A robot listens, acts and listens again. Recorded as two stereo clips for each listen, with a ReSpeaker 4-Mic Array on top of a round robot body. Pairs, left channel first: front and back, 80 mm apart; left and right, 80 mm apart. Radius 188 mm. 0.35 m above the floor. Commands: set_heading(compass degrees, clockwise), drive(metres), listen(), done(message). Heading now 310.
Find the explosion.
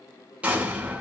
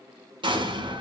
set_heading(55)
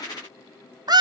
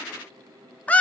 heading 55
done("Facing where the explosion came from. I can't hear it now.")